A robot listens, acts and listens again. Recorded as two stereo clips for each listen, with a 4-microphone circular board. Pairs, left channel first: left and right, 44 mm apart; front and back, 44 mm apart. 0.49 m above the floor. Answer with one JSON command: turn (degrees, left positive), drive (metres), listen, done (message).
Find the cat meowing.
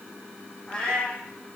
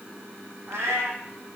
{"turn": 160}
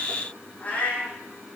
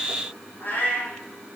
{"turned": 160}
{"turn": 40}
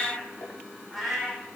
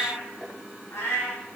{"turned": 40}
{"done": "Facing the cat meowing, over 4 m away."}